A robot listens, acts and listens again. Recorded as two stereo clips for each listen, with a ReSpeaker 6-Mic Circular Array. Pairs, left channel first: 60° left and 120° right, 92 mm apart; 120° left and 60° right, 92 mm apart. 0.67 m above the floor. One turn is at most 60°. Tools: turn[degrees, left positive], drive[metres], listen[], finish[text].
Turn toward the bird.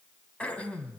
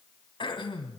Action: listen[]
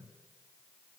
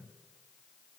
Action: listen[]
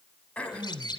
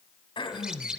Thought: The bird: 20° left.
Action: turn[20]
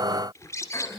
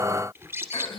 Action: finish[Found it: a bird, straight ahead, 1 to 2 m away.]